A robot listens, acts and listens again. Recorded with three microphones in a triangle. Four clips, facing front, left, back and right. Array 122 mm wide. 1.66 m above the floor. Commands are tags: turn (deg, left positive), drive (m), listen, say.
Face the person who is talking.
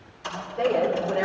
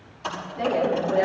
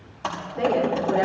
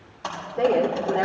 <turn deg="-90"/>
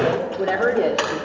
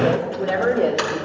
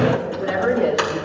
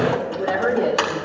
<say>Facing the woman speaking.</say>